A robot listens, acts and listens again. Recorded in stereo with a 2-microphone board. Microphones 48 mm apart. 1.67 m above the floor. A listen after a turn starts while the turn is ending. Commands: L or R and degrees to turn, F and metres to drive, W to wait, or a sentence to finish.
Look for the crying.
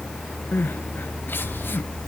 L50
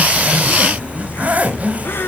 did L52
L65
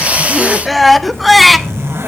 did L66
Found it: crying, straight ahead.